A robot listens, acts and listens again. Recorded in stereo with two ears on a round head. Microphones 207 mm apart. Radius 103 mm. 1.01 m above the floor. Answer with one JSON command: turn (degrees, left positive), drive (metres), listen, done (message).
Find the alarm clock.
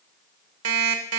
{"turn": -70}
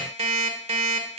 {"turn": -30}
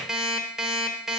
{"done": "Found it: an alarm clock, straight ahead."}